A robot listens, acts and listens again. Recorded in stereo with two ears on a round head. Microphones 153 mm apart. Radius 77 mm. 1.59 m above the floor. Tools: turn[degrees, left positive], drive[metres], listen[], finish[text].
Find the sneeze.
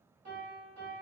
Action: listen[]
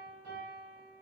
Action: listen[]
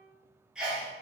Action: turn[-30]
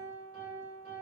Action: listen[]
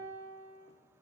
Action: finish[I heard a sneeze, but can't make it out now. It was about 25° left or 145° right.]